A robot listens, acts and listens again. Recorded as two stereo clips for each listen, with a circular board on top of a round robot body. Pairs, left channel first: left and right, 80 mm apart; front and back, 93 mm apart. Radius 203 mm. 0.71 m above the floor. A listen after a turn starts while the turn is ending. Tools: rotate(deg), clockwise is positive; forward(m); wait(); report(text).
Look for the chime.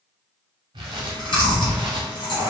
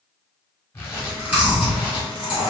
wait()
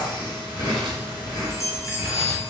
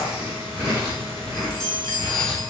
rotate(-40)
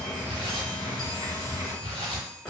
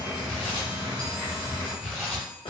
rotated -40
wait()
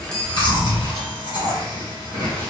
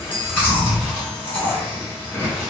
report("Facing the chime, under 1 m away.")